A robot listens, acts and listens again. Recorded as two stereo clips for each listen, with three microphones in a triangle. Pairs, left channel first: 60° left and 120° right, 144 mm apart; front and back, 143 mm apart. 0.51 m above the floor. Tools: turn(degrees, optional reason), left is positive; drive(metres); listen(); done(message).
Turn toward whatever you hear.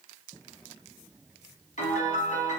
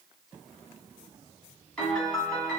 turn(degrees=80, reason="The piano: 80° left.")
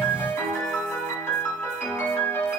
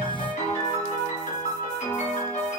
turn(degrees=-10, reason="The piano is now 10° right.")
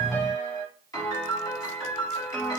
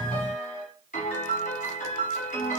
done("Facing the piano, 2 to 4 m away.")